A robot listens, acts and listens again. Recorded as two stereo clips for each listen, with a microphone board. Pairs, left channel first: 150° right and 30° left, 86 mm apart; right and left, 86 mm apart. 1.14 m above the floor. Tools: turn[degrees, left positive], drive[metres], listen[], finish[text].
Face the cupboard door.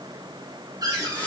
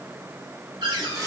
Thought: The cupboard door: 70° left.
Action: turn[70]
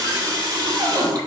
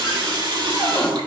Action: finish[Facing the cupboard door.]